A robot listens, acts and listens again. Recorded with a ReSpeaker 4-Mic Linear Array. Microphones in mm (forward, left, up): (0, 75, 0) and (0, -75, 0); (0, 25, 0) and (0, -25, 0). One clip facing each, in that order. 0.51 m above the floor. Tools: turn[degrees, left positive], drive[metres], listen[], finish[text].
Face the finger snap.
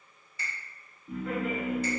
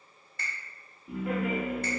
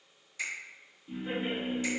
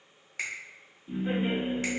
Thought: The finger snap: about 60° right or 120° right.
Action: turn[-60]
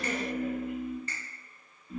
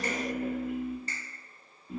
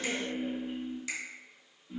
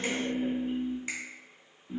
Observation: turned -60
Thought: So it is at 45° right.
Action: turn[-45]
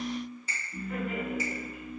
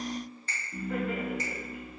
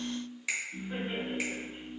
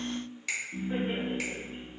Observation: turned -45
Thought: The finger snap is now 10° left.
Action: turn[10]
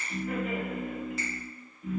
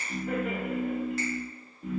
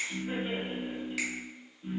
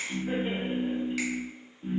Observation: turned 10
Action: listen[]
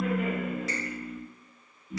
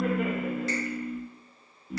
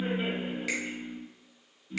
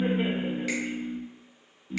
Action: listen[]
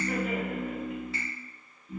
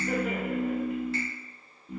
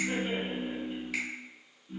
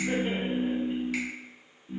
Action: finish[I heard a finger snap from this way, but can't make it out now.]